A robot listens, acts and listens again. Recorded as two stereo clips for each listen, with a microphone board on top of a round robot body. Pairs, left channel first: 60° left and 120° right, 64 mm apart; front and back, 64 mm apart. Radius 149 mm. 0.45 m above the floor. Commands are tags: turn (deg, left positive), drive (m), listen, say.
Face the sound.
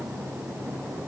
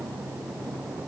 <listen/>
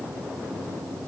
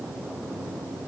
<listen/>
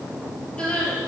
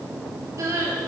<turn deg="135"/>
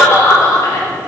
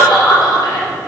<turn deg="10"/>
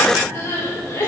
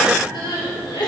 <say>Facing the crying.</say>